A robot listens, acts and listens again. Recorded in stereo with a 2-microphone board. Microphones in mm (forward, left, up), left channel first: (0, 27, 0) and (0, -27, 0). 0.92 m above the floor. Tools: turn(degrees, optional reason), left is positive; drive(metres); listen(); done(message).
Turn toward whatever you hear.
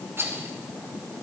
turn(degrees=-55, reason="The rattle: about 55° right or 125° right.")
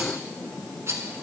turn(degrees=-65, reason="So it is at 65° right.")
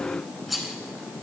done("Found it: a rattle, straight ahead.")